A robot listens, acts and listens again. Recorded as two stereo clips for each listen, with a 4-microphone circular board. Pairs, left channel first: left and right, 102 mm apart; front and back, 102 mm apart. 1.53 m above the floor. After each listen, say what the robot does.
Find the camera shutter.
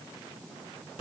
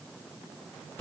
Keep listening.
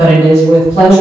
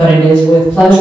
Keep listening.
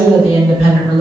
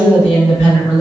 I can't make out a camera shutter to turn to.